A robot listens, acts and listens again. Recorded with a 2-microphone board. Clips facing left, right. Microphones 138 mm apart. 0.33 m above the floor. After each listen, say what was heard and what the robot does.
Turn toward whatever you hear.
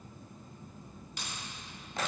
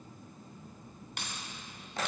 The keys jangling: about 65° right or 115° right. Turn 65° right.
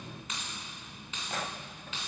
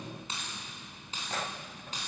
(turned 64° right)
So it is at 40° right. Turn 40° right.
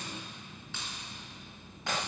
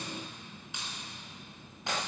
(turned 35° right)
The keys jangling is now 15° right. Turn 15° right.
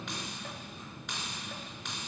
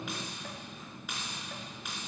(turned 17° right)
Found it: keys jangling, straight ahead.